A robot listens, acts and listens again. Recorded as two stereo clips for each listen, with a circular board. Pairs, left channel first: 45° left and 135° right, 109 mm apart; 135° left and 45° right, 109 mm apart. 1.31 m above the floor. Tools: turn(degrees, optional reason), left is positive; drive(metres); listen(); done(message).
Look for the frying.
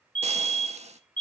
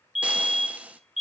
turn(degrees=-120, reason="The frying: 120° right.")
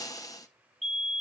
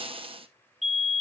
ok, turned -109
turn(degrees=-10, reason="The frying is now 10° right.")
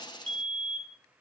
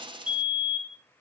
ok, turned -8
done("Found it: frying, straight ahead.")